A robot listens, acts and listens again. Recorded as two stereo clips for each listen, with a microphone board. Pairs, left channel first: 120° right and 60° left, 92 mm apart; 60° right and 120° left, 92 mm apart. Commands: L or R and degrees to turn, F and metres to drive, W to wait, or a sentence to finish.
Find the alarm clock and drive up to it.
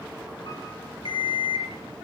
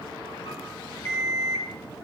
R120
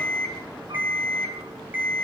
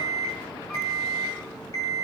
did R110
R10
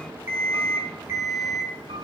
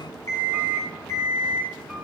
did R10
F1.0
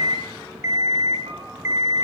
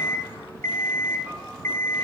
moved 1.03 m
F1.0
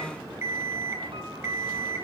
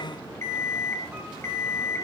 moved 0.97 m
F1.0
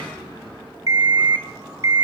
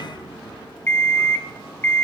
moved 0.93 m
L10
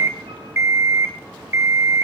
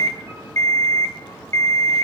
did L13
F1.0
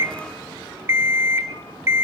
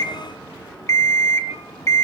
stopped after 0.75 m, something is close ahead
Arrived at the alarm clock, straight ahead.